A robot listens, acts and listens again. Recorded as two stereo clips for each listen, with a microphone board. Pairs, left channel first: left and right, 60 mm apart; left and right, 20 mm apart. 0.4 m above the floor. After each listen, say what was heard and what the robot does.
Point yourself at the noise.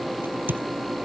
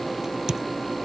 The crack: about 35° right or 145° right. Turn 35° right.
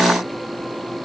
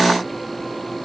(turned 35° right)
Keep listening.
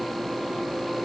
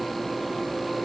I heard a crack, but can't make it out now. It was about straight ahead or 110° right.